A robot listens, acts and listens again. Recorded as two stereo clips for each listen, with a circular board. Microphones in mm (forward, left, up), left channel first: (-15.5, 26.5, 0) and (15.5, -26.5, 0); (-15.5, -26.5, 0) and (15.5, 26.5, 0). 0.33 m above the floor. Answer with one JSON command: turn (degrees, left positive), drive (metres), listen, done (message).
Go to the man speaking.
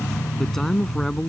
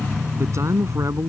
{"turn": 35}
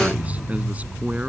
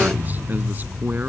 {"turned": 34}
{"drive": 1.0}
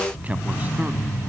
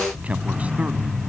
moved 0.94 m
{"drive": 1.0}
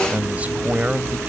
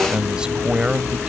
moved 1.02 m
{"turn": -10}
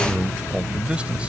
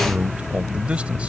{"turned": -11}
{"drive": 1.0}
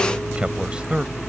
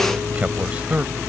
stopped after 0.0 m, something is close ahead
{"done": "I am next to the man speaking."}